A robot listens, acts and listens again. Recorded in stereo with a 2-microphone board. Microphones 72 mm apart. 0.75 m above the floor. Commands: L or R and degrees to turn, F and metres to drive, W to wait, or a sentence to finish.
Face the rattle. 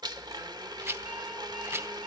R40
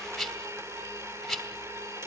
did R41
Found it: a rattle, straight ahead, 2 to 4 m away.